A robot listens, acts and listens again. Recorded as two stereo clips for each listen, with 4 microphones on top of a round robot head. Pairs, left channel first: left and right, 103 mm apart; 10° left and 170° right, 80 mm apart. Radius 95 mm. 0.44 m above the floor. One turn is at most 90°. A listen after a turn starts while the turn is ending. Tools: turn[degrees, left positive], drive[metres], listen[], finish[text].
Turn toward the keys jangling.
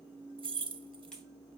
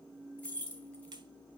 Thought: The keys jangling: 60° right.
Action: turn[-60]
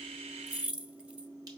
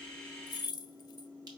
Thought: The keys jangling is now 15° right.
Action: turn[-15]
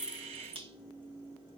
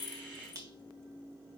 Action: listen[]
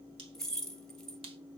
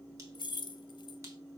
Action: finish[Found it: keys jangling, straight ahead, under 1 m away.]